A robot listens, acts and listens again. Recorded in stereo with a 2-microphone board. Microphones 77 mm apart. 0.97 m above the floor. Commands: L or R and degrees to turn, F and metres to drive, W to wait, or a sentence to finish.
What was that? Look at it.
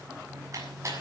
R40
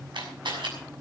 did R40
R100
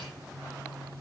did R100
W
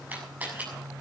R20
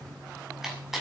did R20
Facing the camera shutter, over 4 m away.